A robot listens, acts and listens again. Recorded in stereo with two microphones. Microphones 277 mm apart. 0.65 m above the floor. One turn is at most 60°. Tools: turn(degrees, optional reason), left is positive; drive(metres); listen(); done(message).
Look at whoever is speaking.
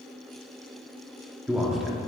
turn(degrees=30)
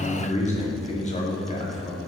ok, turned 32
turn(degrees=60, reason="So it is at 150° left.")
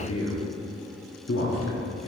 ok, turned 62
turn(degrees=60, reason="The man speaking is now 90° left.")
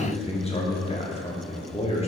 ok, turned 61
turn(degrees=25, reason="The man speaking is now 25° left.")
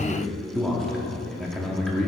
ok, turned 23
done("Facing the man speaking.")